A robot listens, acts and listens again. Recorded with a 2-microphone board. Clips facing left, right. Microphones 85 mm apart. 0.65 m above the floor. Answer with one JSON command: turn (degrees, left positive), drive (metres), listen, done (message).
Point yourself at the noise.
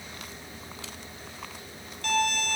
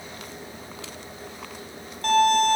{"turn": -45}
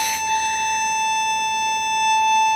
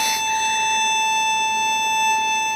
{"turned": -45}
{"done": "Facing the violin, 2 to 4 m away."}